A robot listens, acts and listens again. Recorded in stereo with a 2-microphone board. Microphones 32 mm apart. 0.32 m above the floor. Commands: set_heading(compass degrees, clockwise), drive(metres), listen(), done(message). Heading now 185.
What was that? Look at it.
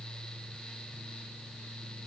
listen()
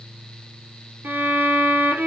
set_heading(255)
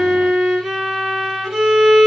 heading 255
done("Found it: a violin, straight ahead.")